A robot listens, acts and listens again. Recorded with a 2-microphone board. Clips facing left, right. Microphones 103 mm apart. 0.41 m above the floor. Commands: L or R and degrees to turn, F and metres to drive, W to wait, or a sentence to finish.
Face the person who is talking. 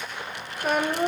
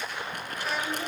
L50
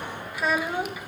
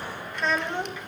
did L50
L10
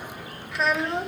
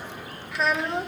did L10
Facing the child speaking.